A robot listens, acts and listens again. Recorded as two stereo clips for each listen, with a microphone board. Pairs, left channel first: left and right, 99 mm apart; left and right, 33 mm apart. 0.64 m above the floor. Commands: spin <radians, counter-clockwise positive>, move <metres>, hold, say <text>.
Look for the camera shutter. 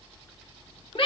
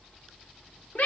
hold
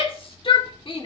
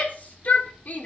hold
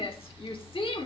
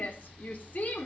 say I can't make out a camera shutter to turn to.